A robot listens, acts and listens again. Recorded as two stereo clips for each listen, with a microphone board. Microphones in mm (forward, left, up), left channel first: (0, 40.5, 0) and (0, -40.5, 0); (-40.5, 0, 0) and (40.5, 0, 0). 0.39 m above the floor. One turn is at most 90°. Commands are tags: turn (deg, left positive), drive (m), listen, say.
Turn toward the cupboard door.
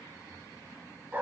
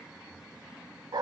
<listen/>
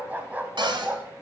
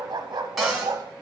<turn deg="-90"/>
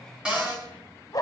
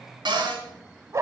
<turn deg="-15"/>
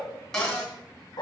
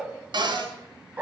<say>Facing the cupboard door, 2 to 4 m away.</say>